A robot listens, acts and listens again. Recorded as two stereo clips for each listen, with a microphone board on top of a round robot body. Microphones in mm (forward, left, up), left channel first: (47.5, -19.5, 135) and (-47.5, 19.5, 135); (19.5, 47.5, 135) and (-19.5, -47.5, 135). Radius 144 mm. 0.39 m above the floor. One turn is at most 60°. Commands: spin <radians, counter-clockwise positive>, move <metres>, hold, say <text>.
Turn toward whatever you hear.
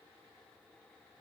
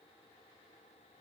hold
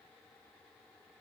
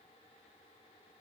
hold
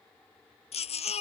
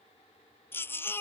say Found it: a baby crying, straight ahead.